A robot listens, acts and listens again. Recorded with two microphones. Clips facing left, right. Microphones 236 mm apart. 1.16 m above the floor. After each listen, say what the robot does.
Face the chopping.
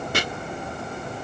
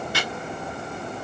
Turn 55° left.
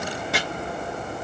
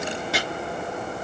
Found it: chopping, straight ahead.